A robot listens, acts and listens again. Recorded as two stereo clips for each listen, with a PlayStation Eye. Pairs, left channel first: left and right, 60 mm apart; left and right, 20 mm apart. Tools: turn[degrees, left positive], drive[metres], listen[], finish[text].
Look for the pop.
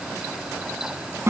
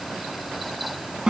Action: listen[]
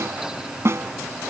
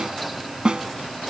Action: listen[]
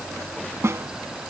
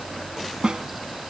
Action: finish[I can't make out a pop to turn to.]